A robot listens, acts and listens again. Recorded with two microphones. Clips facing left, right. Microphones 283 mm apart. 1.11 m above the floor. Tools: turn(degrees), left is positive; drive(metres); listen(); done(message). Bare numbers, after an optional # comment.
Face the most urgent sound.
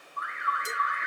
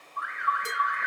# The alarm: about 75° right or 105° right.
turn(-75)
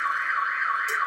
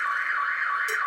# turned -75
done("Facing the alarm.")